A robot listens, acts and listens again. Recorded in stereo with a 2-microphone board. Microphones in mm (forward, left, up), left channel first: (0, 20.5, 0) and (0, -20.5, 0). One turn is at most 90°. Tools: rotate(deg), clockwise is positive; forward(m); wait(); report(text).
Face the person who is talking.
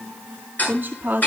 rotate(55)
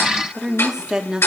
rotate(25)
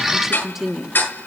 rotate(15)
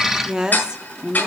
rotate(30)
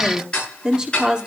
rotate(25)
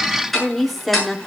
report("Facing the woman speaking.")